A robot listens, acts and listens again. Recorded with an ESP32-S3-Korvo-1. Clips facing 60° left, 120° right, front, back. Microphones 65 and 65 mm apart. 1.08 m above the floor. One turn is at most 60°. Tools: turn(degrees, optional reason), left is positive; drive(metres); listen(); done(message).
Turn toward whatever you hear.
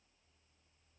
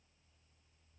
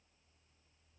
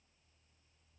listen()
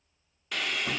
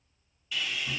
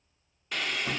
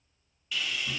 turn(degrees=35, reason="The sawing: 35° left.")
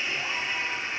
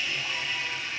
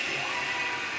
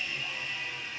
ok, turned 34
done("Found it: sawing, straight ahead.")